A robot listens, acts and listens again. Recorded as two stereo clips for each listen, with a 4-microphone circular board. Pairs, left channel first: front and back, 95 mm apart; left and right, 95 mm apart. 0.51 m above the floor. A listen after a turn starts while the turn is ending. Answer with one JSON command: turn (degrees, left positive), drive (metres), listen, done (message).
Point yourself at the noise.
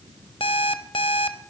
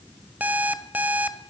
{"turn": -15}
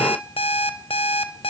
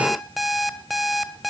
{"done": "Facing the alarm clock, 1 to 2 m away."}